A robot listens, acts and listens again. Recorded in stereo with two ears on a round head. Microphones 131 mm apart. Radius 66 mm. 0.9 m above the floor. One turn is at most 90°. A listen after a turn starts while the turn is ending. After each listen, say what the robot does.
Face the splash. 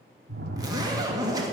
Turn 70° right.
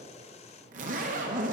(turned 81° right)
Keep listening.
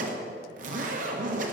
I heard a splash, but can't make it out now. It was about 10° left or 30° right.